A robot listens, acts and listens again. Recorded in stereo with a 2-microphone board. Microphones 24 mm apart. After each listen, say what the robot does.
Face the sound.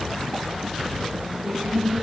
Turn 20° right.
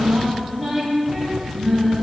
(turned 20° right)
Facing the singing.